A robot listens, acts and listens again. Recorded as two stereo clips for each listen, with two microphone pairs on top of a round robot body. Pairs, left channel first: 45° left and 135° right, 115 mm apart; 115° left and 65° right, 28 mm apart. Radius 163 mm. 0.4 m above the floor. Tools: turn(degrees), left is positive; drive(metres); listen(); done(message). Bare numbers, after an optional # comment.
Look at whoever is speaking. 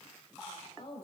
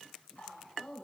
# The woman speaking: 75° left.
turn(75)
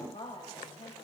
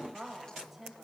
done("Facing the woman speaking.")